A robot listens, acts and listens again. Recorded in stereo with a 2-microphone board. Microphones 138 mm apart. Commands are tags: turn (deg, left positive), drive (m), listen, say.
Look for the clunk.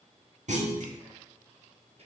<turn deg="-60"/>
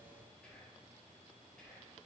<listen/>
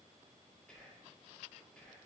<say>I heard a clunk, but can't make it out now. It was about straight ahead or 60° right.</say>